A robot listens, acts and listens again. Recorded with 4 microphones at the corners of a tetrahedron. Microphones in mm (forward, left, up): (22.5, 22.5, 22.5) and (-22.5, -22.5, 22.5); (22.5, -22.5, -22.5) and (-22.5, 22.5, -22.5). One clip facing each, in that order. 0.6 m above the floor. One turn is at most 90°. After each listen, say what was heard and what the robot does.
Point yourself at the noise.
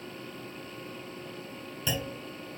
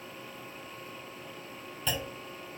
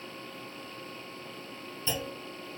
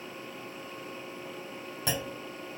The clunk: 135° left. Turn 90° left.
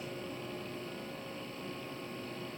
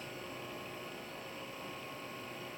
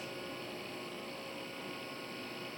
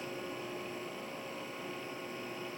Nothing new. It was at 45° left. Turn 45° left.
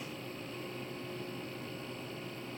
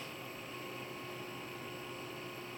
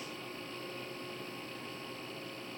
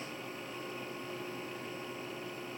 Facing where the clunk came from. I can't hear it now.